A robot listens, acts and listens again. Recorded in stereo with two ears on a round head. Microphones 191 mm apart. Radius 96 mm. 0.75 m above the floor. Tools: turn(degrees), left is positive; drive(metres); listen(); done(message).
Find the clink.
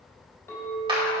turn(degrees=30)
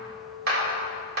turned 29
turn(degrees=-15)
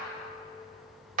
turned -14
listen()
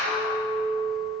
done("Facing the clink.")